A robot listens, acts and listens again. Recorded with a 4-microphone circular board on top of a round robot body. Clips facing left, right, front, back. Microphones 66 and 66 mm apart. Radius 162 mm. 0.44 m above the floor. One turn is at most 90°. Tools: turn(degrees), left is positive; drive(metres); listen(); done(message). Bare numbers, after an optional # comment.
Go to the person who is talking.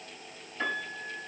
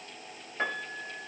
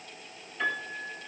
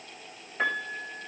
listen()
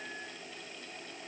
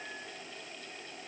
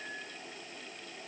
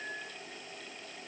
listen()
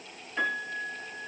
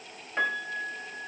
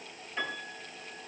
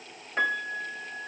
done("I can't make out anyone speaking, only a piano.")